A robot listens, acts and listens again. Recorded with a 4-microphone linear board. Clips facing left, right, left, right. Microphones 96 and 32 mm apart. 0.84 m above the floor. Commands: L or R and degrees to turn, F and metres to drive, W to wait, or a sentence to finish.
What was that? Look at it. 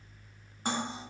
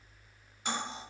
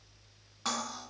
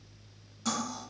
L40
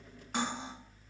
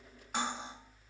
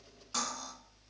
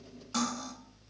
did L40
Facing the cutlery clinking.